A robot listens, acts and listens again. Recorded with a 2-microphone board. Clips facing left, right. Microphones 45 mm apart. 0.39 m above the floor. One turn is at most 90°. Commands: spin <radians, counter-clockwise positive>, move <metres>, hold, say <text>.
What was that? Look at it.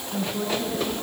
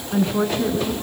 spin -0.96
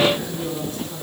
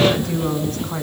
spin -1.13
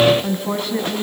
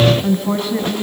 say Found it: a woman speaking, straight ahead, 2 to 4 m away.